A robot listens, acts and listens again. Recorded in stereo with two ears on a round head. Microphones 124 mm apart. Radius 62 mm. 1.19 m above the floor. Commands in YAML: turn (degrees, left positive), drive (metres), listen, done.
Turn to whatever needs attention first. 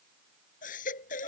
turn: 60
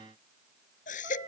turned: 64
turn: 55
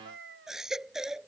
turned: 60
done: "Found it: a baby crying, straight ahead."